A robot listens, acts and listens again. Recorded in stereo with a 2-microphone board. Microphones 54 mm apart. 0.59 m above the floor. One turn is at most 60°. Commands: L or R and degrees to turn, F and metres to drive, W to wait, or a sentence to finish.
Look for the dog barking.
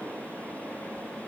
W
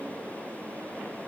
W
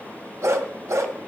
R60
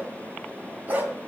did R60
R35
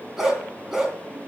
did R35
R10
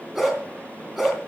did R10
Found it: a dog barking, straight ahead.